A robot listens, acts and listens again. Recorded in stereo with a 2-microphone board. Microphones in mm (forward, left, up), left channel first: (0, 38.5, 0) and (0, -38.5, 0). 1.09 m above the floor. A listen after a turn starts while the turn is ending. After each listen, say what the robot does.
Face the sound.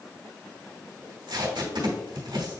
Turn 90° right.
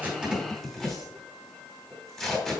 Found it: tape being pulled, straight ahead.